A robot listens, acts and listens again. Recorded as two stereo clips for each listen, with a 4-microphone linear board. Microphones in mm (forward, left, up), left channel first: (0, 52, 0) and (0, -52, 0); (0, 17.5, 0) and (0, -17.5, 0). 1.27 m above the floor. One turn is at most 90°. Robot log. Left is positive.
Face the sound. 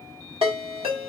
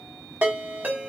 note: The ringtone: about 65° right or 115° right.
cmd yaw -65
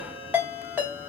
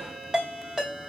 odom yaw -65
note: So it is at 20° right.
cmd yaw -20
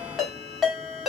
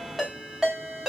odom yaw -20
end: Facing the ringtone.